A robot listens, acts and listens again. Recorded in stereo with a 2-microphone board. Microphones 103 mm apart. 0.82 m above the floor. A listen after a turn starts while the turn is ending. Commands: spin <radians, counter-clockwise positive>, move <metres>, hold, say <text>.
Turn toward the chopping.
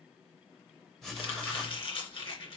spin 0.96
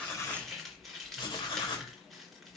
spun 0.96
say Found it: chopping, straight ahead.